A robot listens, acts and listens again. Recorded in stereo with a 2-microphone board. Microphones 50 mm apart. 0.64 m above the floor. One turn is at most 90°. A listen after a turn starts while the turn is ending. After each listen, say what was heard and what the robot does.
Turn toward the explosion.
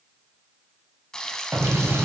The explosion: about 70° right or 110° right. Turn 70° right.
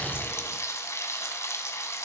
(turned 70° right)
Keep listening.
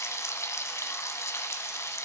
I heard an explosion, but can't make it out now. It was about straight ahead or 40° right.